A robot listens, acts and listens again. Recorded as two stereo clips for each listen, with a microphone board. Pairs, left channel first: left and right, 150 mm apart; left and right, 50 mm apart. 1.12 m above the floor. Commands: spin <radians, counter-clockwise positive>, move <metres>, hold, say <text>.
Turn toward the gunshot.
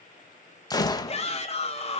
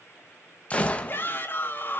spin 0.44
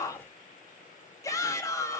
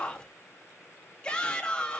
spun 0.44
hold
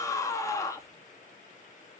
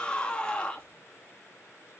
say I heard a gunshot, but can't make it out now. It was about straight ahead or 130° left.